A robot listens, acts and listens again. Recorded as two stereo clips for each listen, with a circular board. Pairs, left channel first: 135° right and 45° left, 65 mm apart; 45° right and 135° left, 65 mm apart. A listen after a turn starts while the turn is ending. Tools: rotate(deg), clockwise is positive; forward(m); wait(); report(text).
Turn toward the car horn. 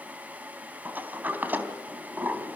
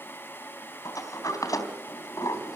wait()
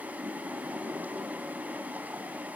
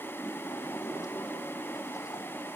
wait()
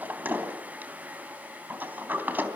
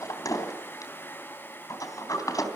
report("I can't make out a car horn, only a sliding door.")